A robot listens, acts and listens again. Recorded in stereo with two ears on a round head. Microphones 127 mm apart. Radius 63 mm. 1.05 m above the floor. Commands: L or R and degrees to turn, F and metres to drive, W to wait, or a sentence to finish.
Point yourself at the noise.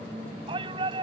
R35
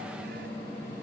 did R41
W
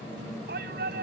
R105
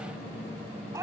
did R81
R20
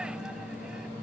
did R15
W
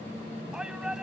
Facing the shout.